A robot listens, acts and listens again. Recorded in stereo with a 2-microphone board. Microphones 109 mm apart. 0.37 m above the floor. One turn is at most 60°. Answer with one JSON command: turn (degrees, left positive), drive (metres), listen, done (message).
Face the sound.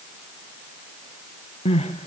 {"turn": 60}
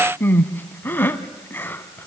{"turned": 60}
{"turn": 20}
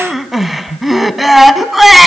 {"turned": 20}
{"done": "Found it: crying, straight ahead."}